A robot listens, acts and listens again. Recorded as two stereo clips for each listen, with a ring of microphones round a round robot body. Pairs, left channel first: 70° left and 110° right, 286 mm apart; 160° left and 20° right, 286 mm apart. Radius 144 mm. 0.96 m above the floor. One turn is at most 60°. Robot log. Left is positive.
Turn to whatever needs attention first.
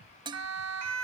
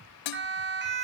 note: The siren: 75° right.
cmd yaw -60
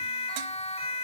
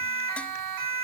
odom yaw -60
end: Found it: a siren, straight ahead.